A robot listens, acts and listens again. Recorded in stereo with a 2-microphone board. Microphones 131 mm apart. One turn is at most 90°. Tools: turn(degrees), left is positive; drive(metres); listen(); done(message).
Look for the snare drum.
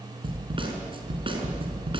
turn(degrees=-40)
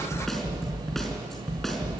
done("Found it: a snare drum, straight ahead.")